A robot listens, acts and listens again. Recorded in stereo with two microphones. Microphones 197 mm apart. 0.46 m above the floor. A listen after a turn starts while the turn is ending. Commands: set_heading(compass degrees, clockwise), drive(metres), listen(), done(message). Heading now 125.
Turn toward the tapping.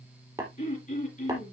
set_heading(140)
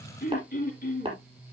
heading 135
set_heading(160)
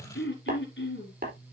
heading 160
set_heading(290)
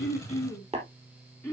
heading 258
set_heading(288)
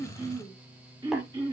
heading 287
listen()
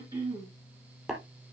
done("Found it: tapping, straight ahead.")